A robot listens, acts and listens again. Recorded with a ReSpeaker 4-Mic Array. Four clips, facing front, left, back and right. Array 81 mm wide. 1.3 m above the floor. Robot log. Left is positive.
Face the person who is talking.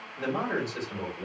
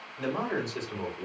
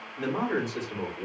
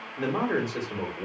note: The man speaking: 95° right.
cmd yaw -95
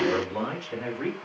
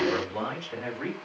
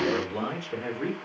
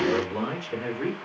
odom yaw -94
end: Found it: a man speaking, straight ahead, 2 to 4 m away.